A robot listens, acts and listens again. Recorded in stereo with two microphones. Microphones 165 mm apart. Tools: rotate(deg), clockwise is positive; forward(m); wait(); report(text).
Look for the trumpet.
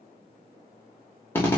wait()
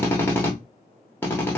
wait()
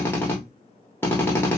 report("I can't make out a trumpet, only a drill.")